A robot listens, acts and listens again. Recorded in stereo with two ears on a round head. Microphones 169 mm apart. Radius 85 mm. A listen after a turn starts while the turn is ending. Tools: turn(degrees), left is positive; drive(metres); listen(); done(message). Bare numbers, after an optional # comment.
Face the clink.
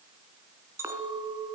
turn(-30)
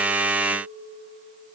# So it is at 135° right.
turn(-135)
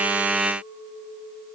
done("Found it: a clink, straight ahead, 2 to 4 m away.")